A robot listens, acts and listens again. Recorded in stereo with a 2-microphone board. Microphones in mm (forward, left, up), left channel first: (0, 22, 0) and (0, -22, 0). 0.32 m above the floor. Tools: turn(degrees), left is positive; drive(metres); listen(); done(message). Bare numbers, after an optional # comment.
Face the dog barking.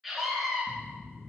listen()
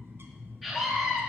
listen()
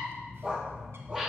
# The dog barking: about 20° right or 160° right.
turn(-20)
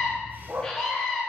# So it is at 125° right.
turn(-125)
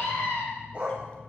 # The dog barking is now 30° right.
turn(-30)
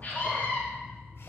listen()
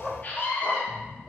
# The dog barking is now 15° left.
turn(15)
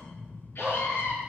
done("Found it: a dog barking, straight ahead, 2 to 4 m away.")